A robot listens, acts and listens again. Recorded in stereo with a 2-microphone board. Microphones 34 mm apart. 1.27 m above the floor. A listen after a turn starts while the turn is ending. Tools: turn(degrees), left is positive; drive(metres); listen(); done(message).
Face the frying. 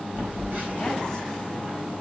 listen()
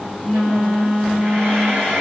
turn(degrees=-90)
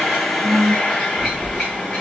done("Found it: frying, straight ahead.")